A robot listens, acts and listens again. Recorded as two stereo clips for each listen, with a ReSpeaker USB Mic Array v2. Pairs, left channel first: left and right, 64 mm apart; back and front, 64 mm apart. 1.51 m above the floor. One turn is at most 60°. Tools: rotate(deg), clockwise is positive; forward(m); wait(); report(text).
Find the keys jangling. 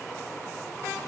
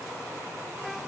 wait()
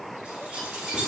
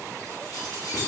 rotate(60)
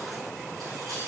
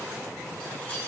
rotate(60)
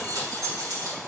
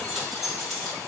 rotate(60)
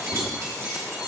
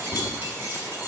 rotate(45)
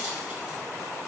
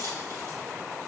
wait()
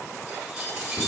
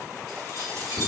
rotate(10)
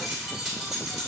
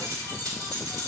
report("Facing the keys jangling.")